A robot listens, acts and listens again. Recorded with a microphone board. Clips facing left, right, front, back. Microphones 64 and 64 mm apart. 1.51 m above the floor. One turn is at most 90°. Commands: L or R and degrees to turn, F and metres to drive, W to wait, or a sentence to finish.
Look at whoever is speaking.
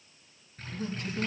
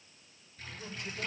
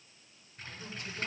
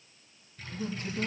L90
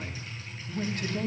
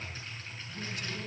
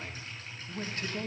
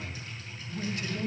L50
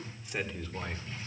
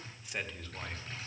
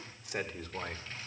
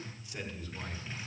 L10
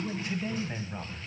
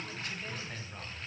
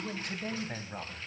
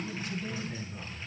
L15
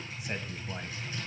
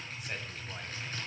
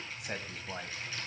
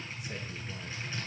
L10
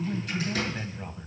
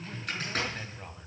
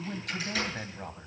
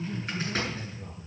Found it: a man speaking, straight ahead, 1 to 2 m away.